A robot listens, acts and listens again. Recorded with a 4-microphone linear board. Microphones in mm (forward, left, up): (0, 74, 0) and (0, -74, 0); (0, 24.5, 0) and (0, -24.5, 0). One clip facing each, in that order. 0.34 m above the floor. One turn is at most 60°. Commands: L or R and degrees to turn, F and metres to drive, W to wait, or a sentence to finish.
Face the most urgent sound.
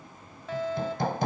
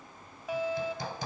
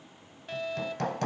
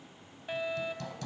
R30
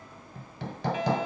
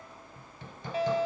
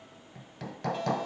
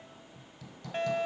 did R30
R60
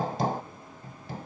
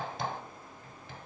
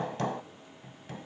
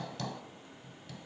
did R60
R60
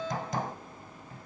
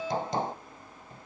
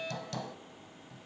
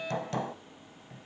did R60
R15
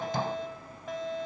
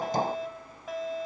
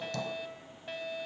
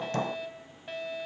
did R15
Found it: a fire alarm, straight ahead.